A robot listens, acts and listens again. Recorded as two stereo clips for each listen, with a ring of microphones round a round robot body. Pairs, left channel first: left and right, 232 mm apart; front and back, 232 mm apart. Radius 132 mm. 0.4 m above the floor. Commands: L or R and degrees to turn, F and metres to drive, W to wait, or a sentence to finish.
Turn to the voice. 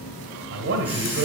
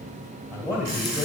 R100
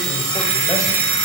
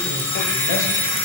W
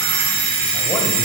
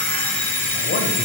W
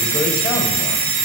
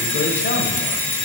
I heard a man speaking from this way, but can't make it out now.